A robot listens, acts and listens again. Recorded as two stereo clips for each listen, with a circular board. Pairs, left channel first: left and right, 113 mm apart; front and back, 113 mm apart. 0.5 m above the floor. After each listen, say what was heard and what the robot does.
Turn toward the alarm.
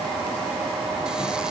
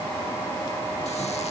Keep listening.
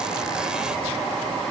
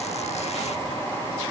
Keep listening.
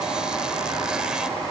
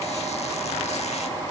I can't make out an alarm to turn to.